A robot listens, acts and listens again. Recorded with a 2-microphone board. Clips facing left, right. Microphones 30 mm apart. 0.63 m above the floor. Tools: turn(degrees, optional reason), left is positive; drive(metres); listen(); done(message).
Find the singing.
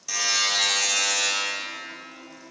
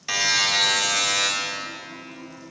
turn(degrees=15, reason="The singing: about 15° left or 165° left.")
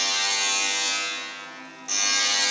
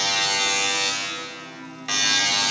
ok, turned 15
turn(degrees=30)
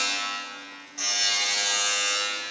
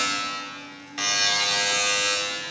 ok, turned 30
listen()
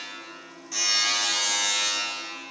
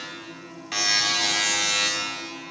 turn(degrees=-15, reason="So it is at 15° right.")
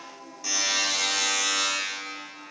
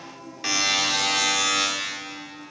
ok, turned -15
done("Facing the singing.")